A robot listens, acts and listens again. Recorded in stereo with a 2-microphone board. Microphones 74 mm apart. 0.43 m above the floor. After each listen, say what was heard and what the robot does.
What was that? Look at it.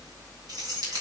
The keys jangling: about 65° right or 115° right. Turn 65° right.
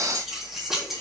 Found it: keys jangling, straight ahead.